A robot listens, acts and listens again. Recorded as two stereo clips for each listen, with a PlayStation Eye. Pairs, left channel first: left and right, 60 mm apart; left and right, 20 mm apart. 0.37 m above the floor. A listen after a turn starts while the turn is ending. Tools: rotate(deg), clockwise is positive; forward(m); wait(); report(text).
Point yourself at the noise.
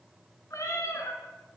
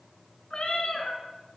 rotate(-65)
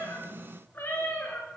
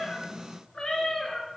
rotate(-25)
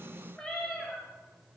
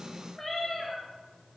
report("Found it: a cat meowing, straight ahead, 2 to 4 m away.")